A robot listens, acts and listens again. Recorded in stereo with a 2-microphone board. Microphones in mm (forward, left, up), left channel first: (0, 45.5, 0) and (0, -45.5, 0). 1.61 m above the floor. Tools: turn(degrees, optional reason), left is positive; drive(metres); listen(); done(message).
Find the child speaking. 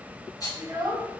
turn(degrees=-40, reason="The child speaking: about 40° right or 140° right.")
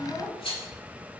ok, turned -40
turn(degrees=-10, reason="So it is at 10° right.")
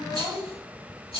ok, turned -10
turn(degrees=-10, reason="The child speaking is now 10° right.")
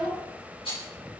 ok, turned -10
turn(degrees=-15, reason="The child speaking is now 15° right.")
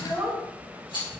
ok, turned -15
turn(degrees=-20, reason="The child speaking is now 20° right.")
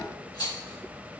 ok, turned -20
listen()
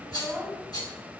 turn(degrees=-10, reason="The child speaking is now 10° right.")
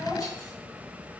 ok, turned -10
done("Found it: a child speaking, straight ahead.")